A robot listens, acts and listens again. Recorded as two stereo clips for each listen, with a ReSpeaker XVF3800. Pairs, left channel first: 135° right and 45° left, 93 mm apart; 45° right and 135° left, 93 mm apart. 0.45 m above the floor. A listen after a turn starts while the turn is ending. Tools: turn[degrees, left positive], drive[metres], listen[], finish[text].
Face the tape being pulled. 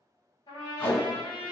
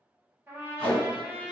Thought: The tape being pulled: 70° right.
Action: turn[-70]
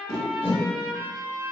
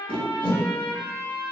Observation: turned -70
Thought: The tape being pulled is now 20° right.
Action: turn[-20]
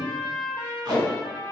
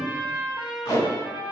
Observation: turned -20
Action: finish[Found it: tape being pulled, straight ahead.]